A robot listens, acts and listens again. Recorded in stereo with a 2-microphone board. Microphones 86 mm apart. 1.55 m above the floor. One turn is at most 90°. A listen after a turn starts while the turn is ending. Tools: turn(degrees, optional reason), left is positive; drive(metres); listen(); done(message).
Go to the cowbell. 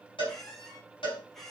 turn(degrees=90)
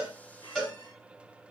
drive(metres=1.0)
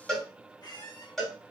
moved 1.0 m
drive(metres=1.0)
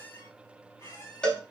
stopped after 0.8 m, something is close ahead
turn(degrees=10, reason="The cowbell is now 10° left.")
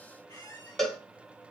done("I am next to the cowbell.")